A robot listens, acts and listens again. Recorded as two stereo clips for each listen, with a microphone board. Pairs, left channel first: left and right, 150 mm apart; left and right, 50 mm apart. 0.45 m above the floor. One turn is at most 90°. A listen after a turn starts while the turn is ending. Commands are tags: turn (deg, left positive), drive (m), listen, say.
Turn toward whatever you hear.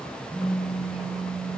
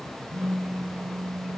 <turn deg="-30"/>
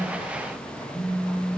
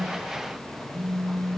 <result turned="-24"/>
<turn deg="15"/>
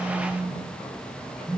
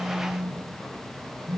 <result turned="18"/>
<say>Facing the phone buzzing, 1 to 2 m away.</say>